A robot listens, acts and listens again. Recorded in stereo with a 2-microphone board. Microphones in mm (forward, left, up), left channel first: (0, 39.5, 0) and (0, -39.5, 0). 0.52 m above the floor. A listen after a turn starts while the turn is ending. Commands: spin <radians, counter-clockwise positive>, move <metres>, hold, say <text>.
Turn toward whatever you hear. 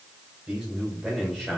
spin 0.52
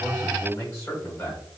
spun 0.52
spin 2.44
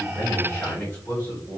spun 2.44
spin 0.44
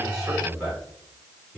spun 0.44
spin -0.26
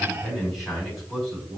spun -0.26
say Facing the man speaking.